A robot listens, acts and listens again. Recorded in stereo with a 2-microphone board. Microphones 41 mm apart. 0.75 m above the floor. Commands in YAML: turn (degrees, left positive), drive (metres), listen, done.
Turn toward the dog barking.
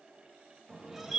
listen: true
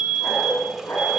turn: 90
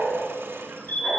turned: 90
done: "Facing the dog barking, 2 to 4 m away."